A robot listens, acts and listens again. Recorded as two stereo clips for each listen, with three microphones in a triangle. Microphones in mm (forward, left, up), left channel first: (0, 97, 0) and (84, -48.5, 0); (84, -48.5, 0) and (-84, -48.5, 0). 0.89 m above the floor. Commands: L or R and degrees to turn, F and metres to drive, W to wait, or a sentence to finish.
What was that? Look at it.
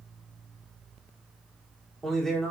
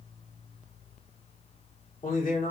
L35
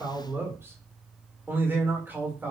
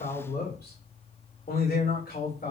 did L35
L20
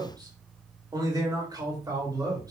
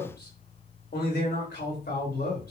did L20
Facing the man speaking.